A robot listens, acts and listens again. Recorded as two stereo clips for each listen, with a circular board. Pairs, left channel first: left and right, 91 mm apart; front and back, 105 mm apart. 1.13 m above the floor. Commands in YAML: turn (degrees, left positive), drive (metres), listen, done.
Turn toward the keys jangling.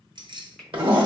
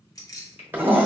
turn: -55
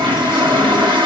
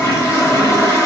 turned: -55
listen: true
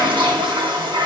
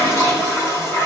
listen: true
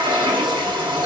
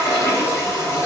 done: "Facing where the keys jangling came from. I can't hear it now."